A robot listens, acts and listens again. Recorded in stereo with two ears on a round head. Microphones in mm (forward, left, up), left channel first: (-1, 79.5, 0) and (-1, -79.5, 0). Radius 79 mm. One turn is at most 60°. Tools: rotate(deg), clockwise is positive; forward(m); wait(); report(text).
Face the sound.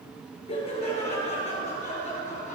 rotate(-45)
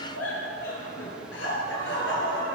rotate(-60)
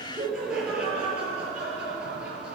report("Found it: laughter, straight ahead, over 4 m away.")